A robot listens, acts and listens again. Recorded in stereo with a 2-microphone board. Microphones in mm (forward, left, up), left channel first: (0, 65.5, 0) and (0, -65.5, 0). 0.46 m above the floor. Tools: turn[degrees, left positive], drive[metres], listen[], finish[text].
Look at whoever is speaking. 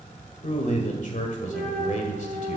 Thought: The man speaking: about 60° left or 120° left.
Action: turn[60]
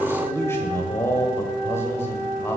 Thought: So it is at 20° left.
Action: turn[20]
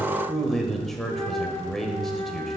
Action: finish[Found it: a man speaking, straight ahead, 1 to 2 m away.]